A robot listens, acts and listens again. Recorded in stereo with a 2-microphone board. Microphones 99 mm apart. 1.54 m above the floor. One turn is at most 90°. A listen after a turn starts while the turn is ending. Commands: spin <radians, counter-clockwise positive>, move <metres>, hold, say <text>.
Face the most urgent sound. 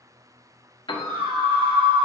spin -1.22
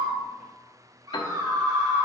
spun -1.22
spin -0.70
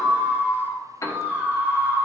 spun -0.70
spin -0.35
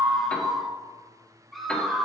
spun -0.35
say Found it: a scream, straight ahead, 1 to 2 m away.